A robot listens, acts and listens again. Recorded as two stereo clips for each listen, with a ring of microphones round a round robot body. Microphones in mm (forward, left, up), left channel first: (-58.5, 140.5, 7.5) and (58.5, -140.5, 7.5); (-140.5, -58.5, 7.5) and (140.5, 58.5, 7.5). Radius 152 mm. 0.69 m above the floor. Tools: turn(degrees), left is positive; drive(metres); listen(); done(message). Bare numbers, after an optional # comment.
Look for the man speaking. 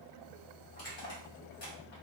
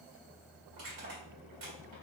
listen()
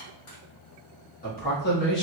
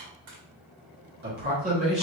# The man speaking: 85° left.
turn(85)
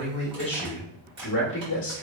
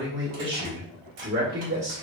# The man speaking is now 75° left.
turn(75)
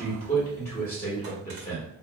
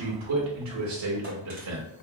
# The man speaking is now 40° left.
turn(40)
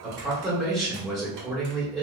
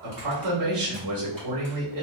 # The man speaking is now 10° left.
turn(10)
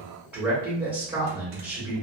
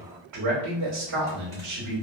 done("Facing the man speaking, 1 to 2 m away.")